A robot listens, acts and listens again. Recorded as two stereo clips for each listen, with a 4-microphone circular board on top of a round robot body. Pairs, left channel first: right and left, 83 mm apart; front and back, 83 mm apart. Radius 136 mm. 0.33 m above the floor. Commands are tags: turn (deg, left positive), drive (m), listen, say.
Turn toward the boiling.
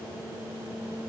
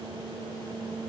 <listen/>
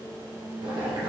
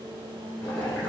<turn deg="70"/>
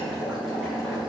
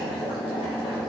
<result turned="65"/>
<say>Facing the boiling.</say>